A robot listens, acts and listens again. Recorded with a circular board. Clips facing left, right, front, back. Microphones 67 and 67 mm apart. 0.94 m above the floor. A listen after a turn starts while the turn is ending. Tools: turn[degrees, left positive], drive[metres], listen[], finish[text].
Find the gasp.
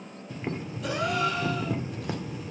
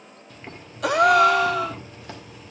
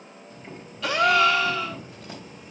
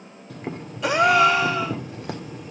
Thought: The gasp: 110° right.
Action: turn[-110]
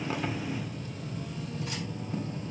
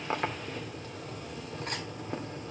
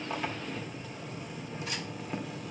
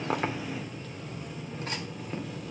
Action: finish[Facing where the gasp came from. I can't hear it now.]